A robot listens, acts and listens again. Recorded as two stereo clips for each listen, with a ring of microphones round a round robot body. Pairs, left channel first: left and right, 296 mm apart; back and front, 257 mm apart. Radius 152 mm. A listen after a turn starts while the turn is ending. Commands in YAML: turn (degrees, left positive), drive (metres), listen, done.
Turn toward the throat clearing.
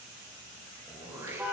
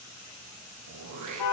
turn: -10
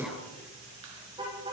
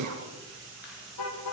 done: "Found it: throat clearing, straight ahead."